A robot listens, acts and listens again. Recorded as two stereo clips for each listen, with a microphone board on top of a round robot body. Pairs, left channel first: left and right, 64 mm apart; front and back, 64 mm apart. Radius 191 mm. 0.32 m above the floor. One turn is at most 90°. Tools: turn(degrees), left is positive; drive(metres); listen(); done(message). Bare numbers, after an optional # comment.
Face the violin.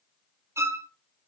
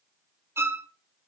# The violin: 135° right.
turn(-90)
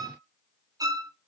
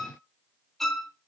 # The violin is now 85° right.
turn(-85)
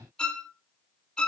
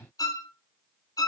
# The violin is now 15° left.
turn(15)
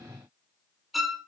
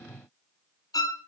done("Facing the violin.")